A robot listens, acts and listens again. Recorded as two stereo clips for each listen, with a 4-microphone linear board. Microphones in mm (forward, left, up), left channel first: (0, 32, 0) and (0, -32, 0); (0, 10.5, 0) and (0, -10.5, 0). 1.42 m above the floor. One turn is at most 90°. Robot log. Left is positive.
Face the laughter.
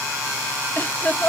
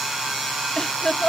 note: The laughter: about 30° left or 150° left.
cmd yaw +30
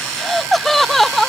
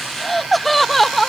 end: Found it: laughter, straight ahead.